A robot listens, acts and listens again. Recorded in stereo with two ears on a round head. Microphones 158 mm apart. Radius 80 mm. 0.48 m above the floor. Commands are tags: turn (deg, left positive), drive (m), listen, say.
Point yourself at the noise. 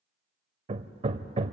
<turn deg="-35"/>
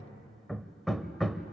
<say>Found it: hammering, straight ahead.</say>